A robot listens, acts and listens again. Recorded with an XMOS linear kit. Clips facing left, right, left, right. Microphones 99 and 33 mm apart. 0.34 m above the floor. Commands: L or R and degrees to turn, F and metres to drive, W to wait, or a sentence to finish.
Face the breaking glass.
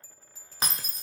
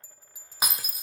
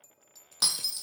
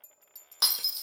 R30
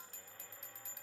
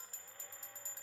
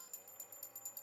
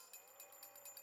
W
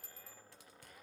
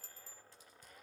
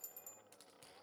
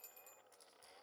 I heard breaking glass, but can't make it out now. It was about 20° left or 140° right.